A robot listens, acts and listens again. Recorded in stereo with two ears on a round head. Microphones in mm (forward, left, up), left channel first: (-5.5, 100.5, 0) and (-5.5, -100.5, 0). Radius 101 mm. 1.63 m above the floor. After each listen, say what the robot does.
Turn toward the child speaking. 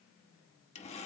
Keep listening.
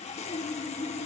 Keep listening.
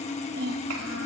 Turn 90° right.
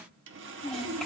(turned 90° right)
Facing the child speaking.